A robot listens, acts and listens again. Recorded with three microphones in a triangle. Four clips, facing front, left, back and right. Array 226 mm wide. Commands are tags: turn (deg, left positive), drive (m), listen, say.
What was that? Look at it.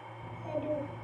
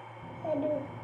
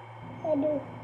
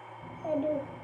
<turn deg="-175"/>
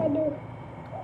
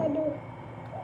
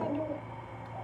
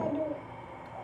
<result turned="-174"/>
<turn deg="35"/>
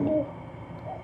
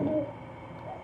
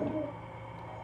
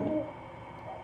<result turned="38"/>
<turn deg="10"/>
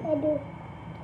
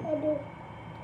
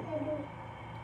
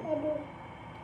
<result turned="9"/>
<turn deg="10"/>
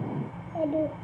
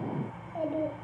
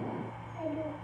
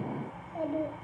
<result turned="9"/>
<say>Facing the child speaking, 1 to 2 m away.</say>